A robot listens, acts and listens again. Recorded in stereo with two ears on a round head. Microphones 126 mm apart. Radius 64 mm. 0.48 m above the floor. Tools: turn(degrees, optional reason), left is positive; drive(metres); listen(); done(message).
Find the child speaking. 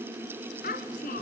turn(degrees=70, reason="The child speaking: about 70° left or 110° left.")
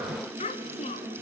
turn(degrees=45, reason="So it is at 45° left.")
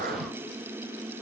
listen()
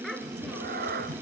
done("Found it: a child speaking, straight ahead.")